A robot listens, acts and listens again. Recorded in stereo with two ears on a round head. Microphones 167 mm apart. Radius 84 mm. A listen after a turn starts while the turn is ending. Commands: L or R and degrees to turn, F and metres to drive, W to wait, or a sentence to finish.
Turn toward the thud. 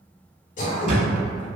R40
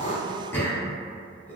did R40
W
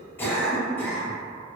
I heard a thud, but can't make it out now. It was about straight ahead or 100° right.